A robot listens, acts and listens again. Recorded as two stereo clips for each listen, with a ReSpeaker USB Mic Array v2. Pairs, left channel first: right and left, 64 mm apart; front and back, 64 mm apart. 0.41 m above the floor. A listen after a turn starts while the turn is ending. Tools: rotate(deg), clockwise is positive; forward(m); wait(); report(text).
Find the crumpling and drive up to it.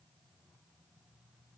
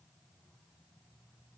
wait()
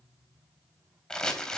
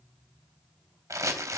rotate(170)
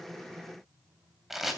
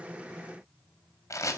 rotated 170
forward(1.0)
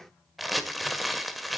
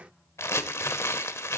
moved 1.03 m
forward(1.0)
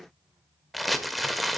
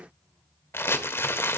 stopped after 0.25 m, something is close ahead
report("I am next to the crumpling.")